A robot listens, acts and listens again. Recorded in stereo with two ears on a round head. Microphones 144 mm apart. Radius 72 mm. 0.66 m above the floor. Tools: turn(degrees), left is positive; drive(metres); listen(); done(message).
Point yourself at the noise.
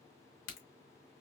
turn(degrees=55)
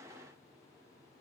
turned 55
listen()
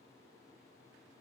done("I heard a crack, but can't make it out now. It was about straight ahead or 70° left.")